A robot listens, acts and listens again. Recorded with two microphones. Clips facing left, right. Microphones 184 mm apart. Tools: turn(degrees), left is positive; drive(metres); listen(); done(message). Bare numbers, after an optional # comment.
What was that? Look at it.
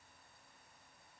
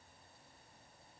listen()
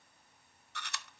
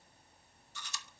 # The chewing: about 65° left or 115° left.
turn(65)
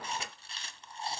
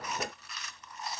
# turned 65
# So it is at 30° left.
turn(30)
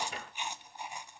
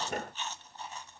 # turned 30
# The chewing is now 15° left.
turn(15)
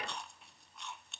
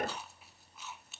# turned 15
done("Found it: chewing, straight ahead.")